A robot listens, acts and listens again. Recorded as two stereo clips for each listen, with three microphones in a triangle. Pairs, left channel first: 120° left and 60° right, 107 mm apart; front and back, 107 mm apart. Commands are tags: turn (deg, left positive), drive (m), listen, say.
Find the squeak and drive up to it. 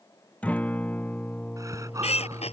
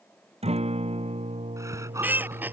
<turn deg="110"/>
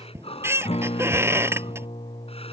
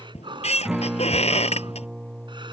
<drive m="1.0"/>
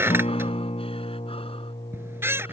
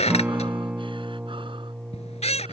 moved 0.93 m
<turn deg="10"/>
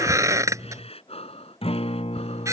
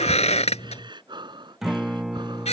<drive m="1.0"/>
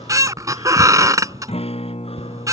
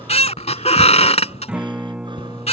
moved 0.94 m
<drive m="1.0"/>
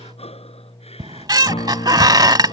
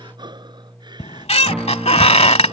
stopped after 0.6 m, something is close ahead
<turn deg="-10"/>
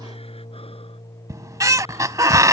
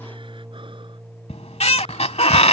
<say>I am next to the squeak.</say>